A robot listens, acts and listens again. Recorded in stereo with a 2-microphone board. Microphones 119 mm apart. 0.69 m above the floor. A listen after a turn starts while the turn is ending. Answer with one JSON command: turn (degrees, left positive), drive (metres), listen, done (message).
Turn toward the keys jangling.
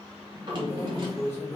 {"turn": 25}
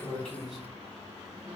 {"done": "Facing the keys jangling."}